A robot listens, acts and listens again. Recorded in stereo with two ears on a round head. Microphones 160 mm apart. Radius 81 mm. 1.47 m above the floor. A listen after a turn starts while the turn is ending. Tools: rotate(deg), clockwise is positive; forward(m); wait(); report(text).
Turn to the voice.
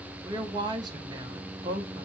rotate(25)
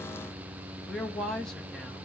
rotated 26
report("Found it: a woman speaking, straight ahead.")